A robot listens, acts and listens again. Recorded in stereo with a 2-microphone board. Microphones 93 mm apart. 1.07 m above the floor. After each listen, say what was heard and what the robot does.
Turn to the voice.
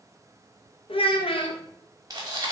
The child speaking: about 75° left or 105° left. Turn 75° left.
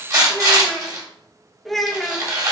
Facing the child speaking.